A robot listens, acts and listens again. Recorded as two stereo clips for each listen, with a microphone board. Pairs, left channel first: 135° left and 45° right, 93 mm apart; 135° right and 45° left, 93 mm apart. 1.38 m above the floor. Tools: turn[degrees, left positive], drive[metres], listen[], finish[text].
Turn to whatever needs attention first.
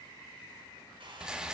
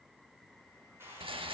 Action: listen[]
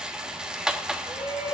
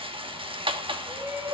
Thought: The shout: 100° left.
Action: turn[100]
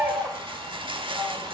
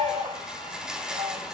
Thought: The shout is now 30° left.
Action: turn[30]
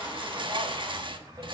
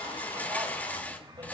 Action: finish[Found it: a shout, straight ahead.]